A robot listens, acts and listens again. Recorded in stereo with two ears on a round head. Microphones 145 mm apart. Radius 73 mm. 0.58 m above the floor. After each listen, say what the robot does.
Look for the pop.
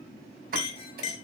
Turn 65° right.
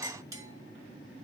Keep listening.
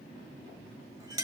I heard a pop, but can't make it out now. It was about straight ahead or 50° right.